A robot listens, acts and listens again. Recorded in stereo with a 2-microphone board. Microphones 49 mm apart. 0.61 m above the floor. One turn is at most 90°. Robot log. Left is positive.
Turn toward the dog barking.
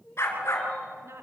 note: The dog barking: about 60° left or 120° left.
cmd yaw +60
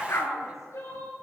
note: So it is at 65° left.
cmd yaw +65
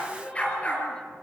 note: The dog barking is now 25° left.
cmd yaw +25
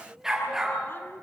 note: The dog barking is now 10° right.
cmd yaw -10
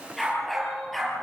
end: Found it: a dog barking, straight ahead, over 4 m away.